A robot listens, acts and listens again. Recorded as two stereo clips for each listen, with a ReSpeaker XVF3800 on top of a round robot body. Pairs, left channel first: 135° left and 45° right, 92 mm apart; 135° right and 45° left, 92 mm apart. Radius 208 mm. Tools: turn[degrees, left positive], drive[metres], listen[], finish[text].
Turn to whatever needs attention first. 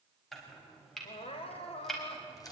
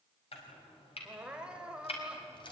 Thought: The crying: 125° left.
Action: turn[125]
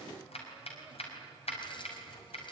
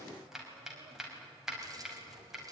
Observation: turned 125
Action: listen[]
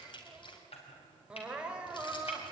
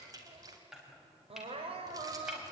Thought: The crying is now 35° left.
Action: turn[35]
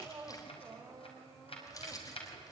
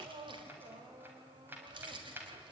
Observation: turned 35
Thought: The crying is now 15° left.
Action: turn[15]
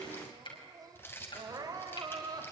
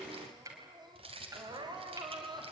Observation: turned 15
Action: finish[Facing the crying.]